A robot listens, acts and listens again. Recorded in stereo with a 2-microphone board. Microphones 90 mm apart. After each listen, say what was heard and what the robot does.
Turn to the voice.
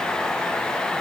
Keep listening.
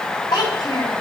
The child speaking: about 45° left or 135° left. Turn 45° left.
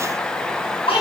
So it is at 90° left. Turn 90° left.
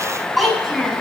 Facing the child speaking.